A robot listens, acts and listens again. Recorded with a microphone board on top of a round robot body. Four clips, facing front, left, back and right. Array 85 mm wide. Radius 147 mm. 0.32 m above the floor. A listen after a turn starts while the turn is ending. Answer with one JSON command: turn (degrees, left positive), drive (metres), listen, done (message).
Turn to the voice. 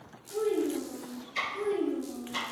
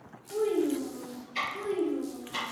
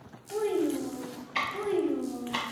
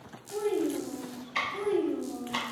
{"turn": -145}
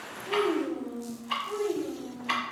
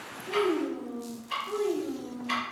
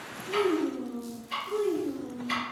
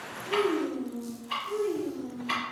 {"turn": 45}
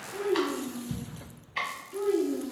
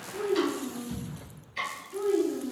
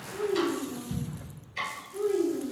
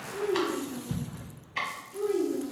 {"turn": 35}
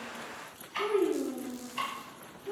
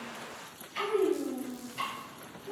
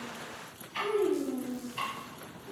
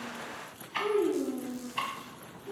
{"done": "Facing the child speaking, 2 to 4 m away."}